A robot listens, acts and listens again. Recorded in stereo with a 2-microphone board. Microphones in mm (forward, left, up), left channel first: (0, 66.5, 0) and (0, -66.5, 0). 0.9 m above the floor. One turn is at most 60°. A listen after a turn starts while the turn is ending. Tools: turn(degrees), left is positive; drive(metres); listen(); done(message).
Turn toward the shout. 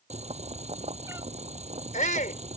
turn(degrees=60)
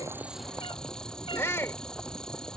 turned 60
turn(degrees=20)
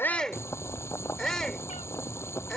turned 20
done("Found it: a shout, straight ahead.")